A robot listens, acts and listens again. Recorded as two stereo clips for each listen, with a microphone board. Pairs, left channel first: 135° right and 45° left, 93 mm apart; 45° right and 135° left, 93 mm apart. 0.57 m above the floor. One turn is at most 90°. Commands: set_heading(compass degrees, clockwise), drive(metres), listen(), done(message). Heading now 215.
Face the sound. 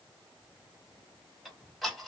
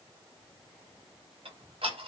set_heading(125)
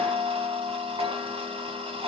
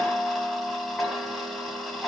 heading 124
set_heading(79)
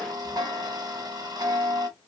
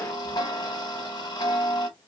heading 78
done("Facing the ticking.")